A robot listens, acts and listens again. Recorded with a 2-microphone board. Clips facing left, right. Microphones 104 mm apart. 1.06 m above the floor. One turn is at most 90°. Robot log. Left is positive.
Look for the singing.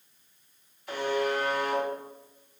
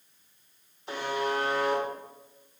cmd idle
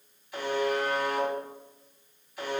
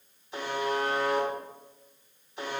cmd idle
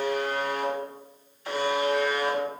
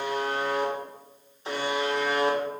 end: I can't make out singing to turn to.